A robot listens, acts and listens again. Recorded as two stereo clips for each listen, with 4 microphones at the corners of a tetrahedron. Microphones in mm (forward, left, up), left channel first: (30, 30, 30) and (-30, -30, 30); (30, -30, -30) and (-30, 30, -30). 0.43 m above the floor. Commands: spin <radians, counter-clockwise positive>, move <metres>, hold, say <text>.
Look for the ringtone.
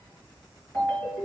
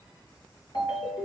spin -0.44
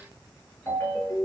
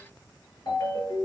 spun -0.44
spin -0.17
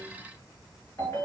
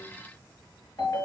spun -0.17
say Found it: a ringtone, straight ahead, 2 to 4 m away.